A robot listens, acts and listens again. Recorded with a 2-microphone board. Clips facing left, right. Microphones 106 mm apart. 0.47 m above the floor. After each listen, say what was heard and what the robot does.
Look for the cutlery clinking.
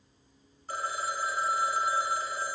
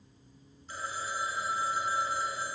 Keep listening.
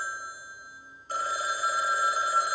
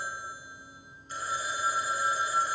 Keep listening.
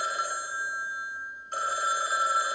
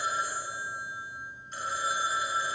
I can't make out cutlery clinking, only a phone ringing.